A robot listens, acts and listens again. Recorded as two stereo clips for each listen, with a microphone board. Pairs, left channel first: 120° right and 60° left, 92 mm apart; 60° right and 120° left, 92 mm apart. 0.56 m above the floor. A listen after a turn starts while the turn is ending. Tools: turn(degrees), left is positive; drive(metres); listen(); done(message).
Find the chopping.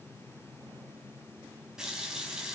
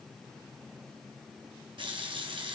listen()
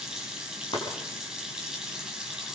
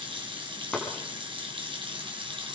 turn(degrees=-140)
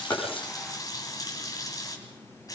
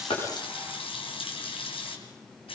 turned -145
listen()
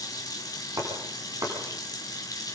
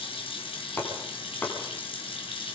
done("Found it: chopping, straight ahead.")